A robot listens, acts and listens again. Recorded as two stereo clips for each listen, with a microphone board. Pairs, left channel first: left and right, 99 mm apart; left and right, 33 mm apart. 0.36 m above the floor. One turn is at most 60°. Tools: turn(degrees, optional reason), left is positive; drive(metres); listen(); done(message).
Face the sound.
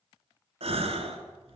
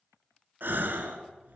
turn(degrees=-60)
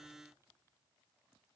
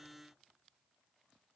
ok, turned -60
turn(degrees=-30, reason="Nothing new. It was at 30° right.")
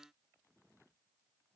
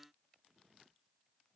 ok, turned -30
done("I heard a gasp from this way, but can't make it out now.")